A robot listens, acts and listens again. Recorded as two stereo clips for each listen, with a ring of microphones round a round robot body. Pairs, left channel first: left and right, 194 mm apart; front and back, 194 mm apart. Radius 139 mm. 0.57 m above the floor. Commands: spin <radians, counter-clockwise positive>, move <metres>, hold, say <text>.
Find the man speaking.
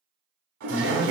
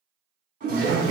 spin 2.62
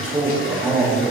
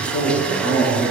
spin 0.17
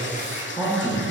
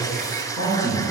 spin 0.17
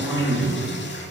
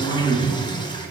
say Facing the man speaking, 2 to 4 m away.